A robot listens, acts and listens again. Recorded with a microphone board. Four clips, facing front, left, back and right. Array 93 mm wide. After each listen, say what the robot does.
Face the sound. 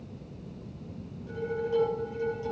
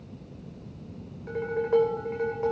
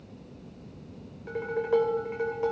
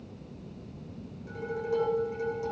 Turn 145° left.
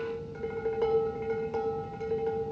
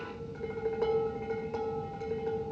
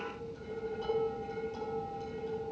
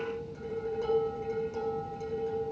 Turn 35° left.
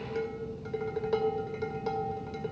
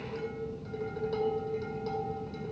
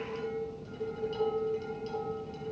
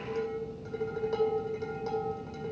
Turn 10° right.
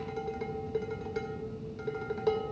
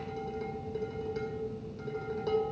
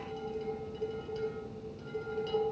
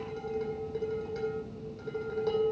Facing the dishes clattering.